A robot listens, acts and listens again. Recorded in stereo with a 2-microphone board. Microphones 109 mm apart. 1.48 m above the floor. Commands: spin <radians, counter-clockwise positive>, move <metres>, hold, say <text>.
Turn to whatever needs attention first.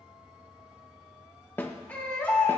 spin 0.52
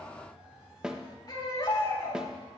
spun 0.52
spin 2.36
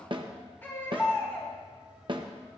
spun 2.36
spin 0.35
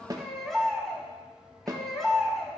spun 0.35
say Found it: a baby crying, straight ahead.